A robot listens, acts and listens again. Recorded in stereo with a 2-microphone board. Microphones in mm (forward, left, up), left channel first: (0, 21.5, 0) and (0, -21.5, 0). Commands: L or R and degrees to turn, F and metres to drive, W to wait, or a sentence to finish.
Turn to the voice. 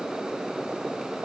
W
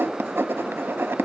W
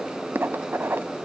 I can't make out anyone speaking, only writing.